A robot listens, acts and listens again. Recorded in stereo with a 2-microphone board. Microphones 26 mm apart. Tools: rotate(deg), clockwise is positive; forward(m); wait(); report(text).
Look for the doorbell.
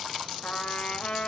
wait()
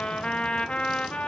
wait()
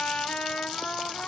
report("I can't make out a doorbell to turn to.")